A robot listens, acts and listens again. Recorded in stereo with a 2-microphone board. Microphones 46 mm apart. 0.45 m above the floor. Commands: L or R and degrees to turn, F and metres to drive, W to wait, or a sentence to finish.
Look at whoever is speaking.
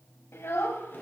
L70
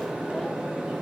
W
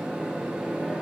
W
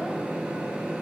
I heard a child speaking, but can't make it out now. It was about straight ahead or 40° left.